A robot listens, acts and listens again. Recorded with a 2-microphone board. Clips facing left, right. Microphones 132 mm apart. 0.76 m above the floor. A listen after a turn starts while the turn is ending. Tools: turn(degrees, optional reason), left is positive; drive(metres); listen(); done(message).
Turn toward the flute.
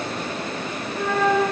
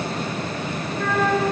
turn(degrees=15, reason="The flute: about 15° left or 165° left.")
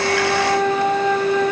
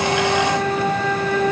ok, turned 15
turn(degrees=150, reason="So it is at 150° left.")
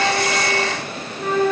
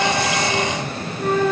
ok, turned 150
done("Found it: a flute, straight ahead, 1 to 2 m away.")